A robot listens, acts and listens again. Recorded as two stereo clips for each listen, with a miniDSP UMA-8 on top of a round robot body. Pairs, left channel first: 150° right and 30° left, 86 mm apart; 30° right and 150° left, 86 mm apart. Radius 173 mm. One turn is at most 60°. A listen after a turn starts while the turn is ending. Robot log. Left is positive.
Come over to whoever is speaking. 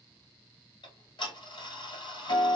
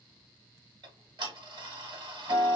cmd idle
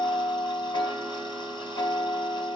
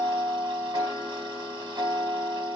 cmd idle
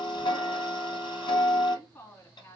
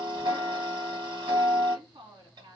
note: The woman speaking: 150° left.
cmd yaw +60
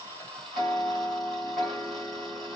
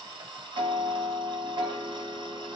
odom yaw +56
note: Nothing new. It was at 95° left.
cmd yaw +60
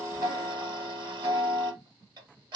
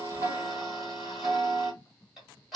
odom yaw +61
note: Nothing new. It was at 35° left.
cmd yaw +35
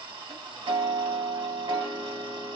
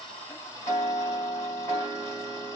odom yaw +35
end: I heard a woman speaking from this way, but can't make it out now. I did not reach it.